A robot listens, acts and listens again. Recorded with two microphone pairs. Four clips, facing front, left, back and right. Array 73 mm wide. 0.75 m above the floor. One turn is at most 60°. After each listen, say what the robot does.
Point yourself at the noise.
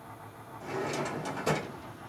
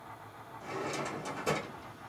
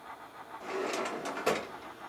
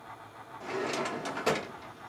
Turn 60° right.
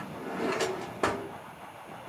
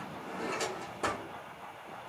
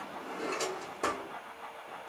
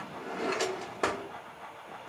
Turn 55° right.
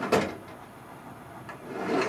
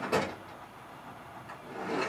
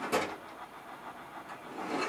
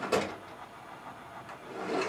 Found it: a drawer, straight ahead, under 1 m away.